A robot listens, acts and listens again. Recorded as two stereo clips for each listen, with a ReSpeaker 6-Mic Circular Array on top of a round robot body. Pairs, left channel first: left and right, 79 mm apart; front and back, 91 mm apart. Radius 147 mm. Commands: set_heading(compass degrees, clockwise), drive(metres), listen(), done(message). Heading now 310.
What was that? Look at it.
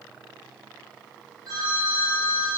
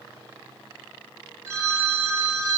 set_heading(65)
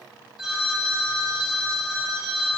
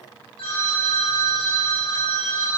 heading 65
done("Found it: a phone ringing, straight ahead, 1 to 2 m away.")